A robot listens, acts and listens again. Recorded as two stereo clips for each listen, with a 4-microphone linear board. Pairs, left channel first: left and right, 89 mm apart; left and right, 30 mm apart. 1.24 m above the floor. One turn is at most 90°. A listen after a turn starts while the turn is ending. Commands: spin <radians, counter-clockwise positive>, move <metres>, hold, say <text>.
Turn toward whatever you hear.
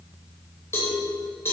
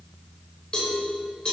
spin 0.52
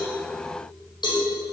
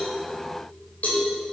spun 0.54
spin 1.57
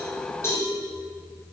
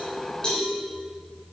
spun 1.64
spin 0.44
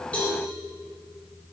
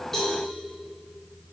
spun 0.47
hold
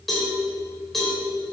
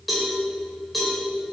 say Facing the cowbell.